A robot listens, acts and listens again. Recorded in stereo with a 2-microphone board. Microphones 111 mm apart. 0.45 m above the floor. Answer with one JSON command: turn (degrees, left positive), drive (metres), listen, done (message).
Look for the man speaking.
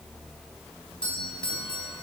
{"listen": true}
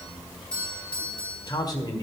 {"turn": 40}
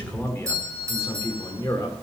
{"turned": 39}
{"turn": 30}
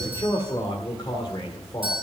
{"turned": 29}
{"turn": 40}
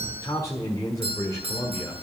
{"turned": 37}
{"turn": 30}
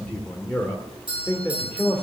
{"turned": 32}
{"turn": 15}
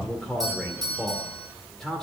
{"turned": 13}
{"done": "Found it: a man speaking, straight ahead, 1 to 2 m away."}